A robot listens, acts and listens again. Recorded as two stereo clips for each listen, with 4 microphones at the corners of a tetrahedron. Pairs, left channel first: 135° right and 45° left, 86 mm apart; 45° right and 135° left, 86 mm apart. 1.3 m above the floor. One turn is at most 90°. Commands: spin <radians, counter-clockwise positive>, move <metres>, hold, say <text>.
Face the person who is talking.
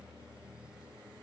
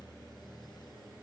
hold
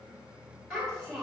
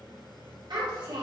spin 1.57
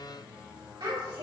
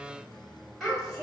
spin 0.70
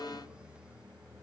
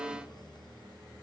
hold
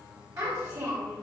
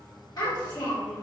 say Facing the child speaking.